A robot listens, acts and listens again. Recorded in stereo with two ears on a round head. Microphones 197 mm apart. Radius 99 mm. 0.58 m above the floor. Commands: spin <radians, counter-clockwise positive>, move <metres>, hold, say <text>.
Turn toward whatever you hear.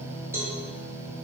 spin -0.52
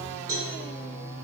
spin -2.36
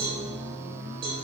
spin -0.44
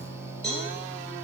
say Found it: a cowbell, straight ahead.